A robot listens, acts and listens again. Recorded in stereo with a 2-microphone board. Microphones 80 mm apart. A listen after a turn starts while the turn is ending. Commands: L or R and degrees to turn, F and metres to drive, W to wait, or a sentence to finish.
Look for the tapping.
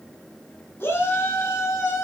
W
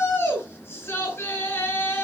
W
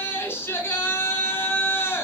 I can't make out tapping, only a shout.